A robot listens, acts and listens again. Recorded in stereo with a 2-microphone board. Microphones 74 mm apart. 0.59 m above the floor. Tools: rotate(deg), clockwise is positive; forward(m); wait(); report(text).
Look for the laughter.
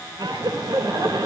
rotate(70)
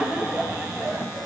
rotate(20)
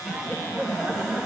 rotate(10)
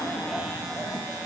report("Found it: laughter, straight ahead.")